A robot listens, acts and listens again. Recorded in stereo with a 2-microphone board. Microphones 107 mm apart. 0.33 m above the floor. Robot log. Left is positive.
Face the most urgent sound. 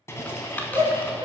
note: The shout: about 55° right or 125° right.
cmd yaw -55
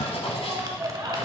note: So it is at 60° right.
cmd yaw -60
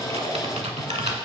cmd idle
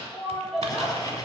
end: Facing the shout.